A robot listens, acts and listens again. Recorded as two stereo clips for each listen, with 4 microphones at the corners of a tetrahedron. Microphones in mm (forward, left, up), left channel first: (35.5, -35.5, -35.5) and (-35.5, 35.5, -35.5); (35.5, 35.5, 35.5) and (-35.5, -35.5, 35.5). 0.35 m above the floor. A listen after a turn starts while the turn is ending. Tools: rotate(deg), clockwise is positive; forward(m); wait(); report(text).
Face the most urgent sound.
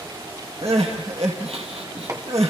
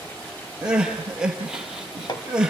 rotate(-145)
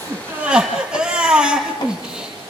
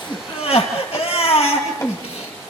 rotate(-55)
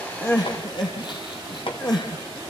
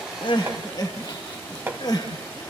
report("Found it: crying, straight ahead, 2 to 4 m away.")